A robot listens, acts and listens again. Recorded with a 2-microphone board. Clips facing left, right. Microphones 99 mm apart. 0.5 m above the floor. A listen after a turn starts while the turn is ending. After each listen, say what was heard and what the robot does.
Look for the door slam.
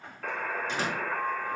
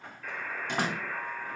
The door slam: about 60° right or 120° right. Turn 60° right.
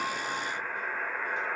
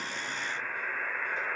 Keep listening.
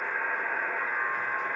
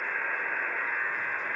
I heard a door slam, but can't make it out now. It was about straight ahead or 60° right.